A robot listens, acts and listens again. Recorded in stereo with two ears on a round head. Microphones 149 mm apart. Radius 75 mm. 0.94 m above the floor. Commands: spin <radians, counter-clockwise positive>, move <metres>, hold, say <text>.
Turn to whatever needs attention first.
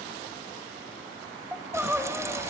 spin -0.52
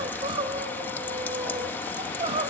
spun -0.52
spin -2.53
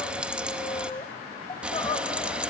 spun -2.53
spin 0.52
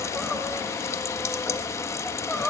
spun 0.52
say Facing the crying.